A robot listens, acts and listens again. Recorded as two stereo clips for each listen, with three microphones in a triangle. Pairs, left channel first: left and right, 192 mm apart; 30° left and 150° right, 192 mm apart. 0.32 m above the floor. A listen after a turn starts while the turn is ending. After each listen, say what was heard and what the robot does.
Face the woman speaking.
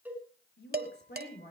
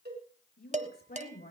The woman speaking: 65° left. Turn 65° left.
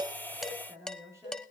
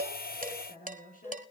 The woman speaking is now 15° right. Turn 15° right.
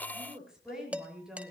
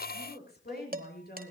Found it: a woman speaking, straight ahead, over 4 m away.